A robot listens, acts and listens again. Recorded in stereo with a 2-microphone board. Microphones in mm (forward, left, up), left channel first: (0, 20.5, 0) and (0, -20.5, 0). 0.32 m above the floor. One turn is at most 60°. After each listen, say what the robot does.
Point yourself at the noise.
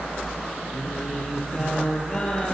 Turn 30° left.
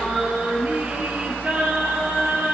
Turn 55° right.
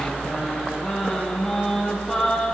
Turn 10° left.
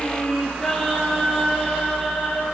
Found it: singing, straight ahead, 2 to 4 m away.